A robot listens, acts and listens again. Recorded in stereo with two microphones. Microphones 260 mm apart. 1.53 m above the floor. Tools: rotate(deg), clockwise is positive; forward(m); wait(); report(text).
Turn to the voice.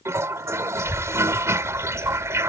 rotate(-35)
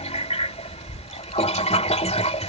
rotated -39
rotate(-105)
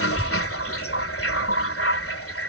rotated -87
rotate(-20)
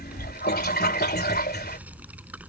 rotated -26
report("Facing the child speaking.")